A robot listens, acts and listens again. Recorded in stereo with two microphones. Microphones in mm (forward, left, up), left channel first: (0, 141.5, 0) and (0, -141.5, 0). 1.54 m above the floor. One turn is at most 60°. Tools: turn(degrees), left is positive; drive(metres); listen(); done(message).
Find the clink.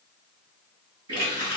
listen()
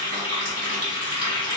listen()
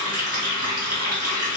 done("I can't make out a clink to turn to.")